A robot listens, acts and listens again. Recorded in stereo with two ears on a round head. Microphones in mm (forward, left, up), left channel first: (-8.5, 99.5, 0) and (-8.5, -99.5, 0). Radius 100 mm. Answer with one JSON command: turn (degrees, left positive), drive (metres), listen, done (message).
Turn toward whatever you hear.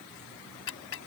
{"turn": 60}
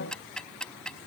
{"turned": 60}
{"done": "Found it: ticking, straight ahead."}